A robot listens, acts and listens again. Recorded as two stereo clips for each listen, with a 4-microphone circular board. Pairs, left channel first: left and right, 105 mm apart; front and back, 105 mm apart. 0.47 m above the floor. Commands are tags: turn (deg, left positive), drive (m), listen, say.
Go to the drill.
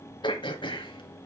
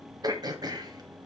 <listen/>
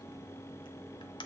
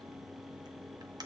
<listen/>
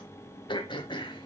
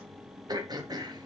<say>I can't make out a drill, only throat clearing.</say>